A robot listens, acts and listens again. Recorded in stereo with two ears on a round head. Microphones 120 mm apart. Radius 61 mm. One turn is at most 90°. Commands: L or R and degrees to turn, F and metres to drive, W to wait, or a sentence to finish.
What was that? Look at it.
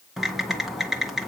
R30
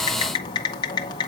L30
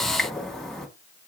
Facing the typing on a keyboard.